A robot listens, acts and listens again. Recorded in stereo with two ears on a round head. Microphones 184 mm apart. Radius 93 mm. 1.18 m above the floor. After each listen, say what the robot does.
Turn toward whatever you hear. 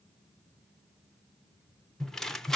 Turn 30° left.
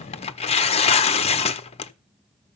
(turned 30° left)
Turn 150° left.
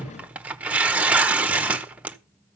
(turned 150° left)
Facing the tearing paper.